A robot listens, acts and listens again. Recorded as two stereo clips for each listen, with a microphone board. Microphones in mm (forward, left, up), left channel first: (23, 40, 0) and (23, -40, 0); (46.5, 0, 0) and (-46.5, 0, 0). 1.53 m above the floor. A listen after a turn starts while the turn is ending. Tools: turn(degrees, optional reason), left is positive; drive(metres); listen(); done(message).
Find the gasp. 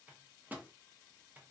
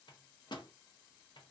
listen()
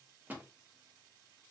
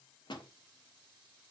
listen()
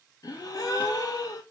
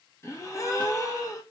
turn(degrees=55, reason="The gasp: 55° left.")
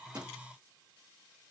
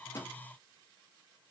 done("I heard a gasp from this way, but can't make it out now.")